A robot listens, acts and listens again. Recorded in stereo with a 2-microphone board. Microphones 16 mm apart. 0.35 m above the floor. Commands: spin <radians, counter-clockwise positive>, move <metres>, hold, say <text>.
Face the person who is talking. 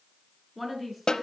spin -0.52
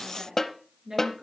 spin -2.44
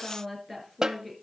spin 0.26
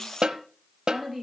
say Found it: a woman speaking, straight ahead, over 4 m away.